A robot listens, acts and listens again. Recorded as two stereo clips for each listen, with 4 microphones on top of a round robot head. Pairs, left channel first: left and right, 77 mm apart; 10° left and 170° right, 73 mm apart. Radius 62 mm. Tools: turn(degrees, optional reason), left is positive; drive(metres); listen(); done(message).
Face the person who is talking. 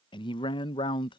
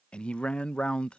turn(degrees=85, reason="The man speaking: 85° left.")
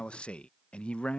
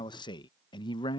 turn(degrees=15, reason="The man speaking is now 15° left.")
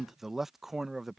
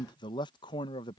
done("Facing the man speaking.")